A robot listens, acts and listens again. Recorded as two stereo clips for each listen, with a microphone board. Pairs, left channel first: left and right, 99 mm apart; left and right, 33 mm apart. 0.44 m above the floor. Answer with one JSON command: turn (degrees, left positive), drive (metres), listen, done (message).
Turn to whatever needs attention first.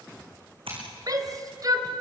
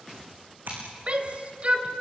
{"turn": -45}
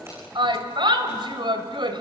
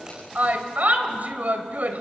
{"turn": -85}
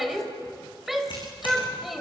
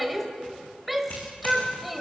{"done": "Facing the shout, 2 to 4 m away."}